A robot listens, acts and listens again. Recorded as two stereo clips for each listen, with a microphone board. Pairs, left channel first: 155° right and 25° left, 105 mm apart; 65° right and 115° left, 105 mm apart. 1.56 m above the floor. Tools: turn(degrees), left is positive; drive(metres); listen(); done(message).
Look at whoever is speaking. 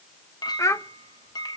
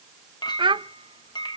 turn(degrees=145)
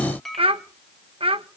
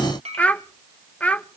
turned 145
turn(degrees=10)
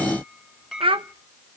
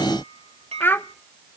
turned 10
done("Found it: a child speaking, straight ahead, under 1 m away.")